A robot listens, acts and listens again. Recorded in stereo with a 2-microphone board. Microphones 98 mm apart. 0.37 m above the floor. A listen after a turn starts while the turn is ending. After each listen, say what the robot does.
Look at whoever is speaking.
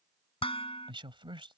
Turn 60° right.
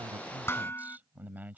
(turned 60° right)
Turn 20° right.
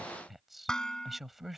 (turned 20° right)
Found it: a man speaking, straight ahead.